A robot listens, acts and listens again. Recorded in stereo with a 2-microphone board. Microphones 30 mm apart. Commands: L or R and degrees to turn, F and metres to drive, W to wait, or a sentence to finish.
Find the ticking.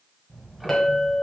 R30
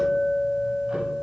W
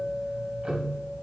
R145
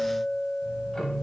L15
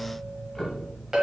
L10
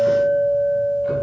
W
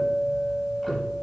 Facing the ticking, under 1 m away.